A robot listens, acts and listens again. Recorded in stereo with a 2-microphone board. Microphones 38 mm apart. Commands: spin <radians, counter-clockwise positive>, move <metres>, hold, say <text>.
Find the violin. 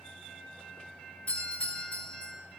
hold
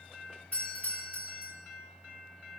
hold
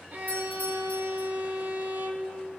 spin -0.96
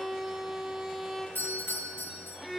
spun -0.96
say Facing the violin.